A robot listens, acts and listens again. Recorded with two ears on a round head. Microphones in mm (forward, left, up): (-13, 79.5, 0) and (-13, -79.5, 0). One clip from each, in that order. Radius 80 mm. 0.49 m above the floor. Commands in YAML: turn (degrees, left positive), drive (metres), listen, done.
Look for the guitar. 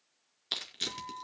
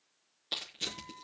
turn: 40
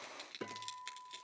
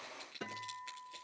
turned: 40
done: "Facing the guitar, 2 to 4 m away."